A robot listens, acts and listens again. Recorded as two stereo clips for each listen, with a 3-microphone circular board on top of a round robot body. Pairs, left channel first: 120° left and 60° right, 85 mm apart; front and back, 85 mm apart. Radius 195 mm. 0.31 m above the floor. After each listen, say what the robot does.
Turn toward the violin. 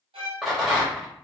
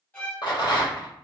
Turn 70° right.
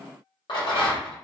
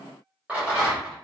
Keep listening.
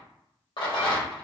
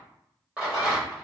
Keep listening.
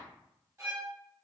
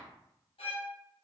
Facing the violin.